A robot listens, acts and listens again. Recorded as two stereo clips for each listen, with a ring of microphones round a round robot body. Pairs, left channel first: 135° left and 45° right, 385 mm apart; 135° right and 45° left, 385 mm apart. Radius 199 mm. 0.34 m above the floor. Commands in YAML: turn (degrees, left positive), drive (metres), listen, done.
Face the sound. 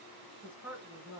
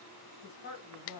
turn: -130
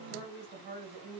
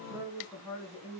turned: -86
turn: -40
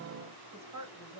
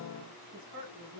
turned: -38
done: "Found it: a woman speaking, straight ahead, 1 to 2 m away."